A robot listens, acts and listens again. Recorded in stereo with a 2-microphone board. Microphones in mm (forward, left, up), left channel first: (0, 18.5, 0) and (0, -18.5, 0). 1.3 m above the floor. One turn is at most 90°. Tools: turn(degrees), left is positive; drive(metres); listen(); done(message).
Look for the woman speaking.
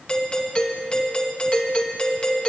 listen()
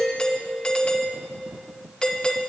listen()
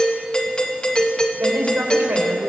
turn(degrees=-75)
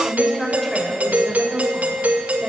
done("Facing the woman speaking, over 4 m away.")